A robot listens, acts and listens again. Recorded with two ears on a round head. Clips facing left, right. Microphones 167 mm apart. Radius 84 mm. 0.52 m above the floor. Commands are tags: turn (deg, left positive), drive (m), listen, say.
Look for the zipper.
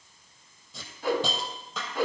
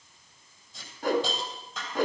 <listen/>
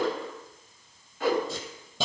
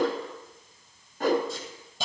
<listen/>
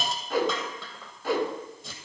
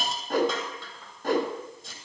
<say>I can't make out a zipper to turn to.</say>